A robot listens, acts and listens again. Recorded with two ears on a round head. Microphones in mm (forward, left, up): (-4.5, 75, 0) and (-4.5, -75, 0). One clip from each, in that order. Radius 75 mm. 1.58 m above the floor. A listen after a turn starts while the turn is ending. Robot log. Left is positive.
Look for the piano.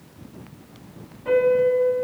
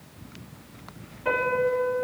note: The piano: about 45° right or 135° right.
cmd yaw -45
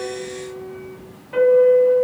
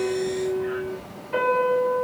end: Facing the piano.